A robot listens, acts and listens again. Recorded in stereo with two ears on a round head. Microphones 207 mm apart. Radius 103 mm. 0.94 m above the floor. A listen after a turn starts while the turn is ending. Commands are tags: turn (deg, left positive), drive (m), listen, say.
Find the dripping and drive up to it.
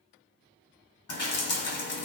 <turn deg="70"/>
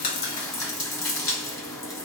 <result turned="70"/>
<turn deg="15"/>
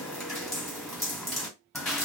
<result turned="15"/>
<drive m="1.0"/>
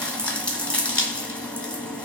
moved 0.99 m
<drive m="1.0"/>
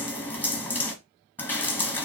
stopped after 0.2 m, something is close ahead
<turn deg="10"/>
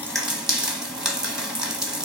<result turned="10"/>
<say>Arrived at the dripping, straight ahead.</say>